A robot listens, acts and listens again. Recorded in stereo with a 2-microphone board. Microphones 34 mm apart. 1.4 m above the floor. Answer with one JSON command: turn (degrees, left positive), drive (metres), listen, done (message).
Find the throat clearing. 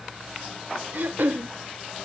{"turn": -60}
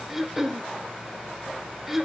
{"done": "Facing the throat clearing, under 1 m away."}